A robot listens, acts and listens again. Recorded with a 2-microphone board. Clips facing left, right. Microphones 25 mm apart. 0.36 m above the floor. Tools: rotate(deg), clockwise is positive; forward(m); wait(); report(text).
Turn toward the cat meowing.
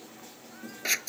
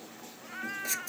rotate(45)
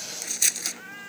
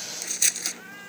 report("Facing the cat meowing.")